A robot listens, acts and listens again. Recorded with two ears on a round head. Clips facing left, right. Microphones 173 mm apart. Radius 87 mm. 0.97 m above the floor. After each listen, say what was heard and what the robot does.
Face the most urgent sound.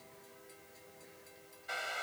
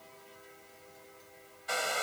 Keep listening.
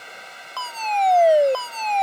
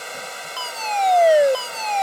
Turn 30° right.
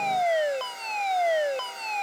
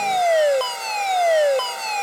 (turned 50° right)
So it is at 120° right. Turn 120° right.
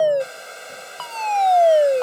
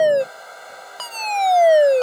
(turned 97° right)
The fire alarm is now 20° right. Turn 20° right.
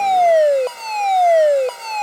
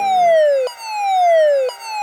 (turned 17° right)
Facing the fire alarm.